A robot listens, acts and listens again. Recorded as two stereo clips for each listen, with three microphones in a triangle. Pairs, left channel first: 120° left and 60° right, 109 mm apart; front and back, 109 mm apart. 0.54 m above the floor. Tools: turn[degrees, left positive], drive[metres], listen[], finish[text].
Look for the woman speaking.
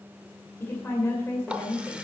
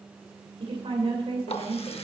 Thought: The woman speaking: 175° right.
Action: turn[-175]
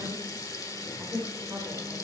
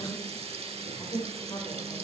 Thought: The woman speaking is now 20° right.
Action: turn[-20]
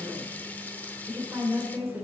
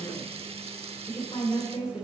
Action: finish[Facing the woman speaking, 2 to 4 m away.]